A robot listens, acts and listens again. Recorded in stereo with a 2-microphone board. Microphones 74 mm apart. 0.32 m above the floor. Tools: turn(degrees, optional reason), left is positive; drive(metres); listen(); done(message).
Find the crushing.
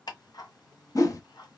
listen()
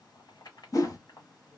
listen()
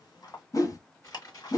turn(degrees=50, reason="The crushing: about 50° left or 130° left.")
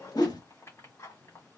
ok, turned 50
listen()
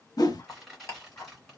done("Facing the crushing.")